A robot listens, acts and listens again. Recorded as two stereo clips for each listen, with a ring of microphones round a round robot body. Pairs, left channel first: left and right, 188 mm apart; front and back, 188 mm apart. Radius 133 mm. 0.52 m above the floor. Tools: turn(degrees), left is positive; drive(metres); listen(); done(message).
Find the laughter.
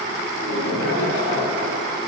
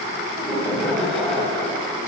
turn(degrees=85)
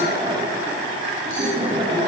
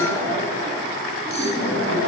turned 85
turn(degrees=-25)
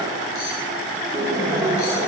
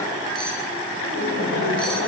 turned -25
turn(degrees=-15)
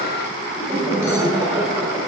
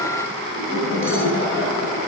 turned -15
done("Facing the laughter, 2 to 4 m away.")